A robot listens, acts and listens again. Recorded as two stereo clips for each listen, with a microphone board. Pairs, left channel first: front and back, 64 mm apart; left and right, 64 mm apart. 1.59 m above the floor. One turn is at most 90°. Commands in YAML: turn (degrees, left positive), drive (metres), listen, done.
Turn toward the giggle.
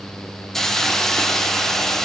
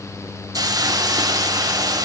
listen: true
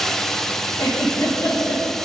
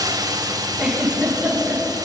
done: "Facing the giggle."